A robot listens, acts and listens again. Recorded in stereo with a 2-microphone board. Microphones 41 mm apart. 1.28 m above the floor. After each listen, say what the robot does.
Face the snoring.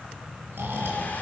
Turn 70° right.
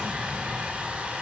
Keep listening.
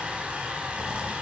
Keep listening.
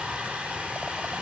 I heard snoring, but can't make it out now. It was about straight ahead or 40° right.